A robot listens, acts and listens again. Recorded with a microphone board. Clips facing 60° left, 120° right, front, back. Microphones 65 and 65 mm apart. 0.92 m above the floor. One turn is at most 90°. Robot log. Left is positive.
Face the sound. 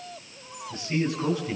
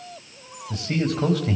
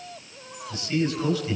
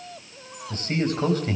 note: The man speaking: 130° right.
cmd yaw -90
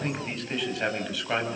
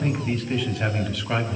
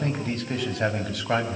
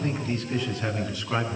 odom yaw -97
note: The man speaking is now 25° right.
cmd yaw -25
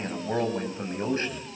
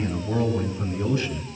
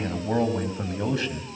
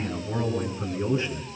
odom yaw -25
end: Facing the man speaking, over 4 m away.